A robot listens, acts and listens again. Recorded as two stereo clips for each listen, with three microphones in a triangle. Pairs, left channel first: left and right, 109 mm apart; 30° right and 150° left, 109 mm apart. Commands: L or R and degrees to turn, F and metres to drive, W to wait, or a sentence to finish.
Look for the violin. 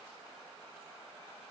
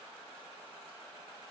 W
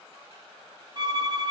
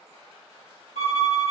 R40
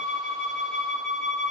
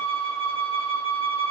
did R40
Found it: a violin, straight ahead.